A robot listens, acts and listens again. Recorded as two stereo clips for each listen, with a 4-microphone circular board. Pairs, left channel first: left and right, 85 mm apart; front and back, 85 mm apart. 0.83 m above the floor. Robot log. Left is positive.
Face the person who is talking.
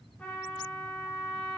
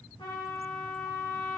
cmd idle
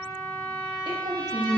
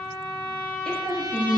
note: The woman speaking: 80° right.
cmd yaw -80
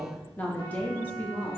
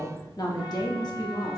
note: The woman speaking is now 25° left.
cmd yaw +25
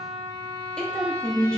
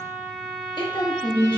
note: The woman speaking is now 10° left.
cmd yaw +10
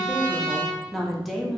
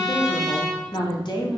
end: Facing the woman speaking.